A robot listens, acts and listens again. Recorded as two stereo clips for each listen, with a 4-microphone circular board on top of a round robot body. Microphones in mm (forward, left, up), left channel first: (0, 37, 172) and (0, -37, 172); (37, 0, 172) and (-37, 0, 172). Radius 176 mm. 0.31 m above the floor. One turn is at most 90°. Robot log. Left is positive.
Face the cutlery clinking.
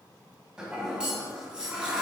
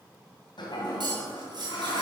note: The cutlery clinking: 170° right.
cmd yaw -90
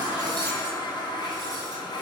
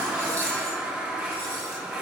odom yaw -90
note: Nothing new. It was at 80° right.
cmd yaw -80
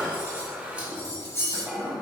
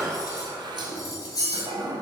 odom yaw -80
note: The cutlery clinking is now 35° left.
cmd yaw +35
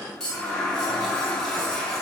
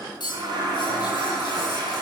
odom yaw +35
note: The cutlery clinking is now 10° left.
cmd yaw +10
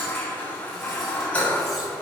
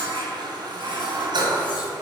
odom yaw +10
cmd idle
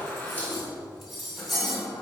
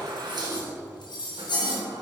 end: Found it: cutlery clinking, straight ahead.